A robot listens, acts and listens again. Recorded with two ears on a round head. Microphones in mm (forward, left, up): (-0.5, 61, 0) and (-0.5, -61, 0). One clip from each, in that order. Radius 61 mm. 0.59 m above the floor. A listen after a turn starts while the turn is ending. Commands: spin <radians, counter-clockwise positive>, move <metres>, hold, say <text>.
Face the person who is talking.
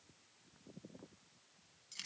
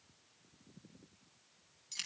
hold
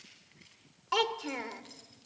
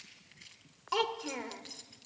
spin 0.52
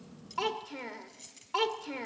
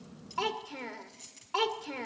say Found it: a child speaking, straight ahead, 1 to 2 m away.